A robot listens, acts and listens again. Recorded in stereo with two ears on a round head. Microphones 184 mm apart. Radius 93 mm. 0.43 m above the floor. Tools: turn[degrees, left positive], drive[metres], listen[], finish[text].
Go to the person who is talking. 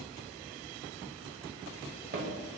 Action: listen[]
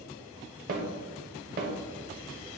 Action: listen[]
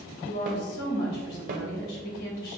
Thought: The woman speaking: about 50° left or 130° left.
Action: turn[50]
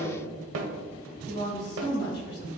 Thought: So it is at 65° left.
Action: turn[65]
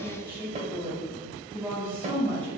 Thought: The woman speaking is now 10° left.
Action: turn[10]
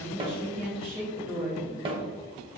Action: drive[1.0]
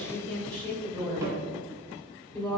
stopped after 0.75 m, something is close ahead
Thought: The woman speaking is now 10° left.
Action: turn[10]
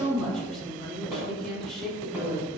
Action: finish[I am next to the woman speaking.]